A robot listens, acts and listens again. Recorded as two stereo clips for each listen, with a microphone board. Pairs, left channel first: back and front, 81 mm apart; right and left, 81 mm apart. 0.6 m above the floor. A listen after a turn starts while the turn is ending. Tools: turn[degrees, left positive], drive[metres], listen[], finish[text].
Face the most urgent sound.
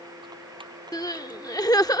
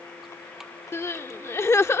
Thought: The crying: 145° right.
Action: turn[-145]
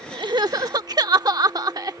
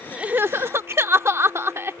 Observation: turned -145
Thought: The crying is now 35° left.
Action: turn[35]
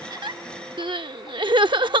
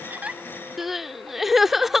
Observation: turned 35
Action: finish[Facing the crying.]